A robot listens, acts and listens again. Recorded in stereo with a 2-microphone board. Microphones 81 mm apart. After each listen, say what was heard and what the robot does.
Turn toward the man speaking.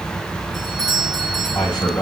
The man speaking: about 60° left or 120° left. Turn 60° left.
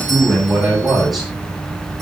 Found it: a man speaking, straight ahead.